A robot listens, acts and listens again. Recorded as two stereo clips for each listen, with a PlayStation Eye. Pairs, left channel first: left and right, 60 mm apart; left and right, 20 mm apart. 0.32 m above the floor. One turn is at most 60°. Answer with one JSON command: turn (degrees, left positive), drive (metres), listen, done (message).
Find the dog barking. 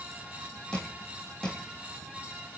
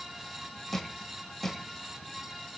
{"listen": true}
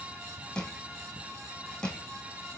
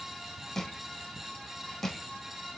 {"listen": true}
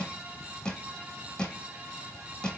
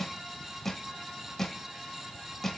{"done": "I can't make out a dog barking to turn to."}